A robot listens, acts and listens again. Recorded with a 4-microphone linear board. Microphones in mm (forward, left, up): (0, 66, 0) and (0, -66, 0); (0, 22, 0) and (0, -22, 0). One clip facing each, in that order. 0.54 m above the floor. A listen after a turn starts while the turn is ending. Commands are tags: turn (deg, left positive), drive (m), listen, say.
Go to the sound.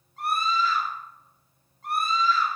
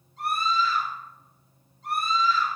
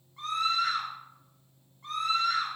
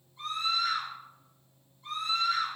<turn deg="55"/>
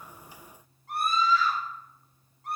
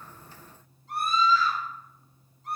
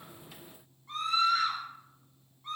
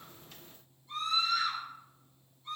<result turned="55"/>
<turn deg="65"/>
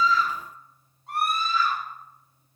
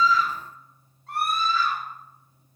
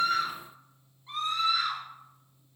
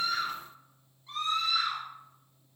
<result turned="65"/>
<turn deg="20"/>
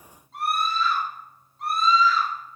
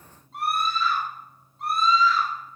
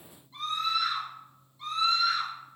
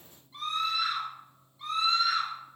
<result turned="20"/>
<drive m="1.0"/>
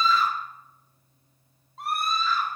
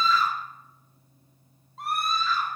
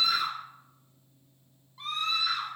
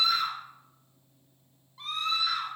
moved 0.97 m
<drive m="1.0"/>
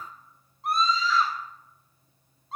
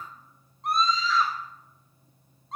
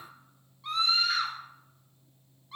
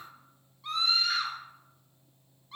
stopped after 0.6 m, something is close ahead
<say>Arrived at the scream, straight ahead.</say>